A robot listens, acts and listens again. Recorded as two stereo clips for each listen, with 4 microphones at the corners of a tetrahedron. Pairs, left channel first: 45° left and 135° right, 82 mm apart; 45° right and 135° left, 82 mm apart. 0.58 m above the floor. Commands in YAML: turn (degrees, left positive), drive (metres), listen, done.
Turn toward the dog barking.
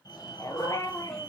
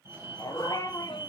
done: "Facing the dog barking."